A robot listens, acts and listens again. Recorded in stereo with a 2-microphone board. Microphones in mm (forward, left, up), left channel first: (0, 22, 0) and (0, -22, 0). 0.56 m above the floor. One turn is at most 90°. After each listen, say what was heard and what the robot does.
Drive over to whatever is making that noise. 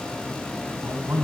The man speaking: about 70° right or 110° right. Turn 70° right.
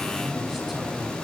Drive 1.0 m forward.
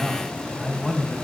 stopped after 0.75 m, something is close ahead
Blocked. The man speaking is further on, straight ahead.